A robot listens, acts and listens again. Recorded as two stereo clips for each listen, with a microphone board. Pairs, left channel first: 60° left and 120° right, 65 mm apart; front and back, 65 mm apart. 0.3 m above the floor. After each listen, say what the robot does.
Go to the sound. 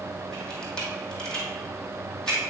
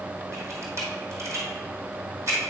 Turn 135° left.
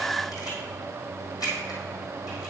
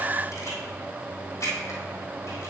Turn 40° left.
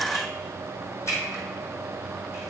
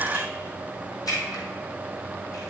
Turn 20° left.
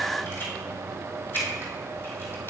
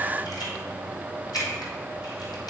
Drive 1.0 m forward.
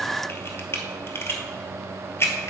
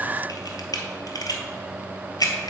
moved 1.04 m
Turn 10° left.
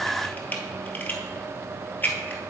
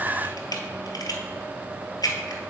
Drive 1.0 m forward.
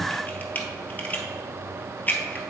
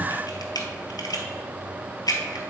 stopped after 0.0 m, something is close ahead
I am next to the camera shutter.